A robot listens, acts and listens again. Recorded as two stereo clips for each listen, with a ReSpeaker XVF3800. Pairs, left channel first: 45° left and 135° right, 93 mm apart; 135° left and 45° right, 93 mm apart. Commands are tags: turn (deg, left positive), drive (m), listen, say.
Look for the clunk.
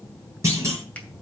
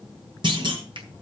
<turn deg="-80"/>
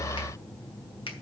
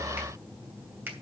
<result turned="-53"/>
<turn deg="-25"/>
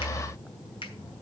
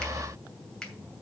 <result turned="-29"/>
<say>Facing where the clunk came from. I can't hear it now.</say>